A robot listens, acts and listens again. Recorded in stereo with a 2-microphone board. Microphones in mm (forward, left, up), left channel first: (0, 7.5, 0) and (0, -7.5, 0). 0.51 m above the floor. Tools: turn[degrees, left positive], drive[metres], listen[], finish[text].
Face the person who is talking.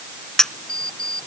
Action: listen[]
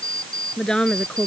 Thought: The woman speaking: about 65° left or 115° left.
Action: turn[65]
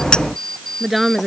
Action: finish[Facing the woman speaking.]